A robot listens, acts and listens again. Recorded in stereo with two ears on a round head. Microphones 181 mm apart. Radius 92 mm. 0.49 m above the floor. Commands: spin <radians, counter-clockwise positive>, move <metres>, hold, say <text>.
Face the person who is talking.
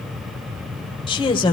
spin 0.44
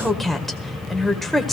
say Facing the woman speaking.